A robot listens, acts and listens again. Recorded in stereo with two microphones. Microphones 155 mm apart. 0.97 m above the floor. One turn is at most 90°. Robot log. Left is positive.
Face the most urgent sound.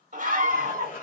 note: The scream: about 60° right or 120° right.
cmd yaw -60
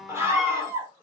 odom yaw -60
note: So it is at 20° right.
cmd yaw -20
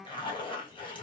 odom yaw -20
cmd idle
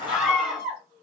end: Found it: a scream, straight ahead, 1 to 2 m away.